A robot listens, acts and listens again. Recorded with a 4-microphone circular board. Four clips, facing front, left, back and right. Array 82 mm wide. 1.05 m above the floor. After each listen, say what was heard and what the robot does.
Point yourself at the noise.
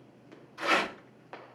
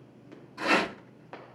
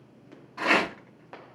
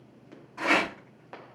The rattle: 155° right. Turn 155° right.
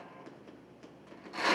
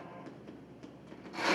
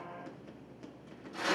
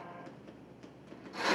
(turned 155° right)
Found it: a rattle, straight ahead, 2 to 4 m away.